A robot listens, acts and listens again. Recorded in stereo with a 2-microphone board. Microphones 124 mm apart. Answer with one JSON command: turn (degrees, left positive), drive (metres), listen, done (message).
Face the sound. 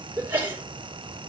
{"turn": -30}
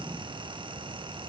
{"listen": true}
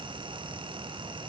{"done": "I heard a sneeze, but can't make it out now. It was about 15° left or 135° right."}